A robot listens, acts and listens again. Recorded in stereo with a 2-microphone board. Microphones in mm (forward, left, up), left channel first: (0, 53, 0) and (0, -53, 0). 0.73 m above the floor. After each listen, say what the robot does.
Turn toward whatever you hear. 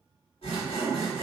Turn 90° left.
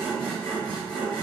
Turn 10° left.
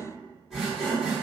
Facing the sawing, 1 to 2 m away.